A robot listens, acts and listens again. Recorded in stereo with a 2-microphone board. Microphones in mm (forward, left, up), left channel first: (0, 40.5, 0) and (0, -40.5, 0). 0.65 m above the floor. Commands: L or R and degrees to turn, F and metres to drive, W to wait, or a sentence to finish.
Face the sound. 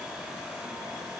W
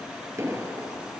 R40
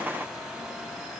W
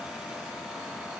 I heard an explosion, but can't make it out now. It was about straight ahead or 100° right.